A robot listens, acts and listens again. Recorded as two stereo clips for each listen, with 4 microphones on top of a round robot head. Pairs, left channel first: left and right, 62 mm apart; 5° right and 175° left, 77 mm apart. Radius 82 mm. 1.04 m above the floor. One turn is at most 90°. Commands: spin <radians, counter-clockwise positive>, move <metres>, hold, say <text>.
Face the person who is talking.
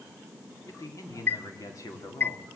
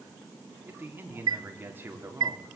spin 1.57
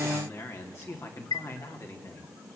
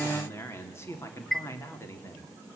spin 0.87
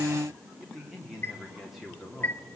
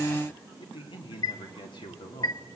say Found it: a man speaking, straight ahead, 2 to 4 m away.